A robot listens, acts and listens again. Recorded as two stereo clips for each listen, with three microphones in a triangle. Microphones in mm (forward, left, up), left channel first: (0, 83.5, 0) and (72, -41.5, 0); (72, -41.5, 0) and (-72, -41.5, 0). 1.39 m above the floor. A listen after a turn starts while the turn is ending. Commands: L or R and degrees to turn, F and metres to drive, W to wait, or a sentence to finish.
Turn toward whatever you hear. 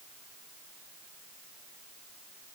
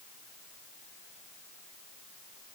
W
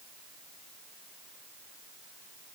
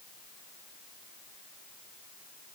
W
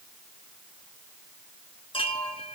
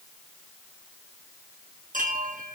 L165
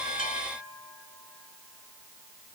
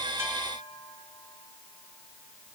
W
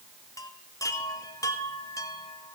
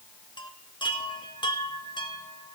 L55
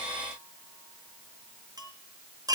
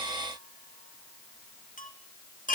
Facing the chime, 1 to 2 m away.